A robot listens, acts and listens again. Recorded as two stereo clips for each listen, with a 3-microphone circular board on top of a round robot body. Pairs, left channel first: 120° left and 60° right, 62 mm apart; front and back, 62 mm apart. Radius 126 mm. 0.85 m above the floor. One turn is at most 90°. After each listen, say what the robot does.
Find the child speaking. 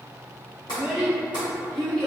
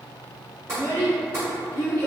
Turn 50° left.
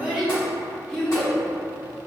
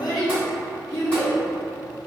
Turn 40° left.
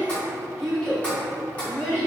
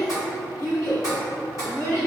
Turn 45° left.
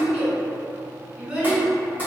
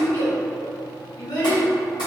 Found it: a child speaking, straight ahead, 2 to 4 m away.